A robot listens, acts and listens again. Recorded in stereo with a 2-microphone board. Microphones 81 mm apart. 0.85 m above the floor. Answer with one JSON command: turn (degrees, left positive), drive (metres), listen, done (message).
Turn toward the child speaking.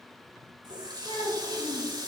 {"turn": 65}
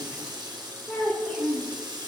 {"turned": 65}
{"turn": 15}
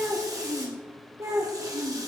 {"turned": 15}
{"turn": -45}
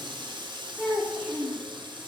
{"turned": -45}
{"done": "Found it: a child speaking, straight ahead."}